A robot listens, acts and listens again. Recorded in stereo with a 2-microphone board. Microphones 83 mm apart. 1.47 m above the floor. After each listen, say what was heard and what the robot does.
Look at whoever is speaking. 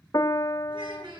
Turn 90° right.
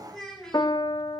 Found it: a child speaking, straight ahead.